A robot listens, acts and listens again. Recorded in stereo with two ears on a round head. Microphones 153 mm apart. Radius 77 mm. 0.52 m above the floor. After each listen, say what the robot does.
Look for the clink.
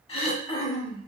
Keep listening.
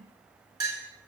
Turn 20° right.
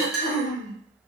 Facing the clink, 1 to 2 m away.